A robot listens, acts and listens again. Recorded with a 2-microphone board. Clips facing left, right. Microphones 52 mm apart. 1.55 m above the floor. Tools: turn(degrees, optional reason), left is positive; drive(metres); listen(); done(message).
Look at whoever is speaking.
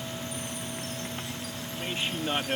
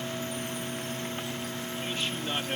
turn(degrees=20, reason="The man speaking: about 20° left or 160° left.")
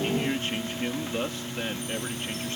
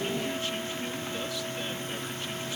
turn(degrees=140, reason="So it is at 140° left.")
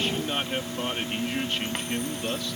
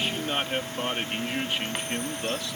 turn(degrees=-10, reason="The man speaking is now 10° right.")
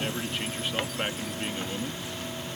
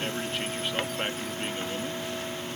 done("Facing the man speaking.")